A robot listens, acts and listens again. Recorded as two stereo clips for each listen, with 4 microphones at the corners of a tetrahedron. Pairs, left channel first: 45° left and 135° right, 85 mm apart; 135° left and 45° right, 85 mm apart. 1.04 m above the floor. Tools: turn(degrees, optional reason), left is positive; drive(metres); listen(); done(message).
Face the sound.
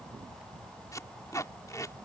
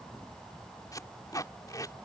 turn(degrees=90, reason="The tape being pulled: 90° left.")
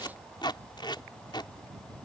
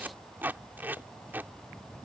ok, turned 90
turn(degrees=20, reason="The tape being pulled is now 20° left.")
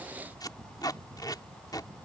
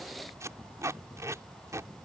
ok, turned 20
done("Found it: tape being pulled, straight ahead.")